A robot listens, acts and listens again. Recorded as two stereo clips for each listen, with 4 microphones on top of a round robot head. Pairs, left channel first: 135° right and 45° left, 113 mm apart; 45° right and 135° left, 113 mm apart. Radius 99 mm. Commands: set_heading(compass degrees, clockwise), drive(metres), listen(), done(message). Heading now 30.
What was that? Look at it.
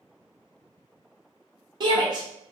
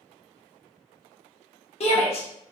set_heading(40)
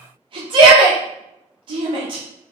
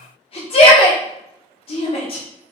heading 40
done("Facing the shout, under 1 m away.")